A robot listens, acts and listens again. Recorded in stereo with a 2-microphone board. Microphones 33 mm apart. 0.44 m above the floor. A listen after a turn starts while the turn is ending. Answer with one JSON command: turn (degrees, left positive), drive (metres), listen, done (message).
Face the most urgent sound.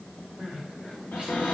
{"turn": -25}
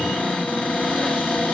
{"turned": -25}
{"listen": true}
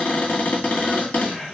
{"done": "Facing the crying, 2 to 4 m away."}